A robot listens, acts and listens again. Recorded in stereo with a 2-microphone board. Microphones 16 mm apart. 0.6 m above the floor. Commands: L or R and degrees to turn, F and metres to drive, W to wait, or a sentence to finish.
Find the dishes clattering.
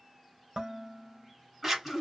R90
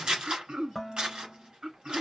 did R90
Found it: dishes clattering, straight ahead, 1 to 2 m away.